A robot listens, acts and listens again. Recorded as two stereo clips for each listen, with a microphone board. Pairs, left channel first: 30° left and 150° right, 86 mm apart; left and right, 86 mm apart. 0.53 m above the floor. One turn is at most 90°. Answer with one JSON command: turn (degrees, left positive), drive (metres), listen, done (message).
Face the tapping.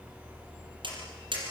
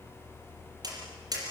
{"turn": -90}
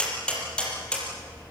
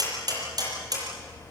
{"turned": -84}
{"turn": -50}
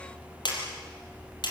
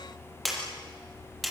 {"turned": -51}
{"done": "Found it: tapping, straight ahead, over 4 m away."}